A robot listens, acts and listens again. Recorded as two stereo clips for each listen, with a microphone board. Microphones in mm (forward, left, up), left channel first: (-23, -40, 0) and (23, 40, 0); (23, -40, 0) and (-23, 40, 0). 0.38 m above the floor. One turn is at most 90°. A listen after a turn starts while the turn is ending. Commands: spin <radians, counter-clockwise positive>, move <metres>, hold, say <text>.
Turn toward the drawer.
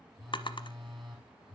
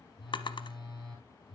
spin -1.57
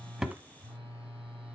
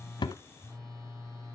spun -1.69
hold
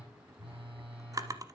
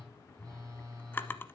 spin 0.17
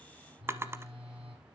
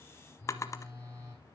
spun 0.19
say Facing the drawer, under 1 m away.